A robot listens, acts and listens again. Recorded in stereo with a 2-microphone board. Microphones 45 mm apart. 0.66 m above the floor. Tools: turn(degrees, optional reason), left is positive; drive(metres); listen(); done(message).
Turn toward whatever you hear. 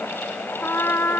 turn(degrees=65, reason="The trumpet: about 65° left or 115° left.")
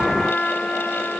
turn(degrees=20, reason="So it is at 20° left.")
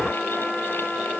done("Facing the trumpet.")